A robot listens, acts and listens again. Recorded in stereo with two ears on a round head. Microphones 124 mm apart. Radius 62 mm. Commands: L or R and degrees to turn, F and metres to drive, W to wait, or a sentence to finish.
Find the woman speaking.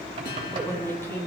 L15
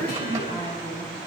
L25
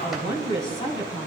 L35
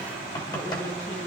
L125
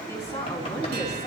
L25
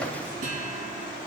W
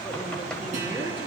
R10
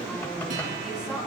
Facing the woman speaking.